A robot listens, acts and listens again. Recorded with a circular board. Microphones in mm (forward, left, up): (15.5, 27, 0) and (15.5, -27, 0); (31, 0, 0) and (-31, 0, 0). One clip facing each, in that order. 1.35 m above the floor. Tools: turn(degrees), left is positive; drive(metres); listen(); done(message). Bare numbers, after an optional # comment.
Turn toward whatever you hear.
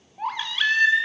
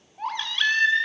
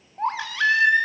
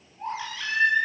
done("Found it: a baby crying, straight ahead, 2 to 4 m away.")